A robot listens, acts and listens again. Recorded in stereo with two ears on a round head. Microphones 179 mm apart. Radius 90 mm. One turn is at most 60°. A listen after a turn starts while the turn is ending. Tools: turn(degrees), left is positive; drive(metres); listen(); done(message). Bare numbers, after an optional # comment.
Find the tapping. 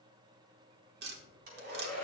# The tapping: about 50° right or 130° right.
turn(-50)
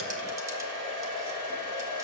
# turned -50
listen()
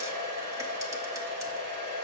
listen()
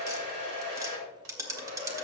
# So it is at 20° right.
turn(-20)
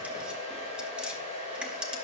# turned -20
done("Found it: tapping, straight ahead, 1 to 2 m away.")